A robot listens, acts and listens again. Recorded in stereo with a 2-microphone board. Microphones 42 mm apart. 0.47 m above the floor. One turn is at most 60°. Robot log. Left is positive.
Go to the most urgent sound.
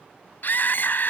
note: The scream: about 50° left or 130° left.
cmd yaw +50
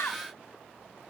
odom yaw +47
note: So it is at 80° left.
cmd yaw +60
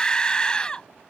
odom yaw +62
note: The scream is now 25° left.
cmd yaw +25
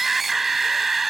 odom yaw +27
cmd fwd 1.0
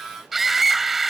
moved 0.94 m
cmd fwd 1.0
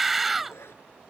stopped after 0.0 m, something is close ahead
end: Something is in my way. I am facing the scream but have not reached it.